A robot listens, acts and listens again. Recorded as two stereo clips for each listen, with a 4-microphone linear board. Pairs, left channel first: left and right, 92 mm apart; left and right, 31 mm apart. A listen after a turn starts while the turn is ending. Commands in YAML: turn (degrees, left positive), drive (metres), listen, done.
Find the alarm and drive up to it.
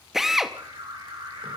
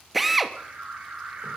turn: -70
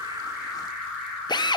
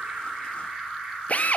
drive: 1.0
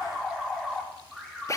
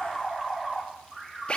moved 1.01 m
drive: 1.0
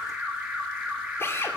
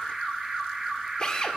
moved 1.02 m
turn: -15
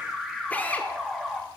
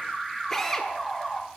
drive: 1.0
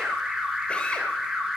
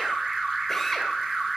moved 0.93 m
drive: 1.0
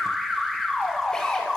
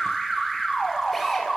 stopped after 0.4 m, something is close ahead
done: "I am next to the alarm."